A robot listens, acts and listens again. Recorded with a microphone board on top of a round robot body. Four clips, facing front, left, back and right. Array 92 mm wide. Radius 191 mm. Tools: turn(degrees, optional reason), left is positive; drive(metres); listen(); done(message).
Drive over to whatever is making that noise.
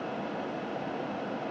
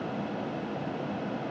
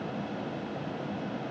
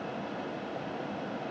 listen()
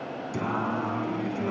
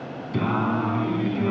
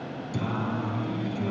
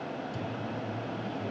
turn(degrees=65, reason="The singing: 65° left.")
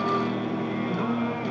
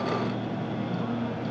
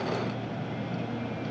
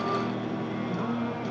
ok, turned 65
turn(degrees=-10, reason="The singing is now 10° right.")
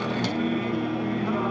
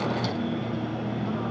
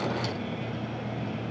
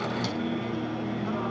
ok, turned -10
drive(metres=1.0)
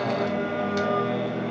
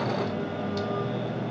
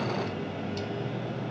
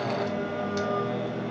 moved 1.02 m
turn(degrees=-10, reason="The singing is now 10° right.")
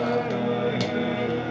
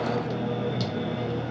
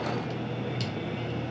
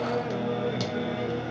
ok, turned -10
drive(metres=1.0)
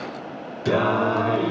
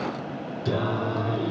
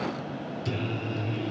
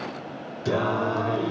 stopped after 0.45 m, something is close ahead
turn(degrees=-10, reason="The singing is now 10° right.")
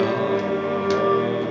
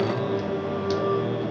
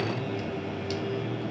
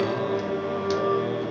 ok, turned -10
done("I am next to the singing.")